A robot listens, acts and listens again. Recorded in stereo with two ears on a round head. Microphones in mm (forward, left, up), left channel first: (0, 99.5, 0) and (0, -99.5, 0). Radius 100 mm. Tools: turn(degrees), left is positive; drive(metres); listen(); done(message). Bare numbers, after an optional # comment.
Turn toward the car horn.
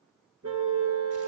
turn(-90)
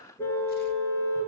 # So it is at 10° left.
turn(10)
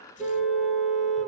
done("Found it: a car horn, straight ahead, 2 to 4 m away.")